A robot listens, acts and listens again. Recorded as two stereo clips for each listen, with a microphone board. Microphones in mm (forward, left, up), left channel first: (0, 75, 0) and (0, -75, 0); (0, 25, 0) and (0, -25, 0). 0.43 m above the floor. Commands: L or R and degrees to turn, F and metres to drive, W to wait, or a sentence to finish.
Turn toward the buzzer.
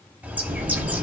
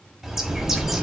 R60
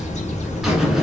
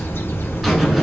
Facing the buzzer, 1 to 2 m away.